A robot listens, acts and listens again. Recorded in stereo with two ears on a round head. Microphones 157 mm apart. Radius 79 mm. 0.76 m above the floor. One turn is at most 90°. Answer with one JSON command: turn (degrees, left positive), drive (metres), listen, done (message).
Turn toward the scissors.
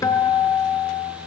{"listen": true}
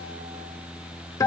{"listen": true}
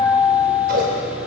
{"turn": -55}
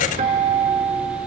{"listen": true}
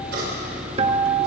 {"turn": -65}
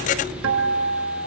{"done": "Found it: scissors, straight ahead."}